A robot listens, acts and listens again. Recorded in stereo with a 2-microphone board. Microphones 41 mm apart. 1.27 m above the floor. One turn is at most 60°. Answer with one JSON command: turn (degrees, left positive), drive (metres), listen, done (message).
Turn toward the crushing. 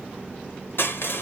{"turn": 55}
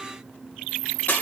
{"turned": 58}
{"turn": 55}
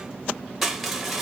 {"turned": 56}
{"done": "Found it: crushing, straight ahead, 1 to 2 m away."}